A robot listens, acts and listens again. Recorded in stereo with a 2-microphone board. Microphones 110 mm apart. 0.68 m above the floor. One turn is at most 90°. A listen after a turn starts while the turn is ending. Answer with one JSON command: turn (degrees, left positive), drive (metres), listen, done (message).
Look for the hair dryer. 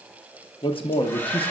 {"turn": 20}
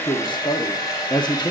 {"turn": 90}
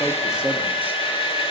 {"turn": 70}
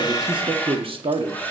{"turn": 15}
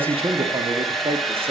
{"done": "Found it: a hair dryer, straight ahead, 1 to 2 m away."}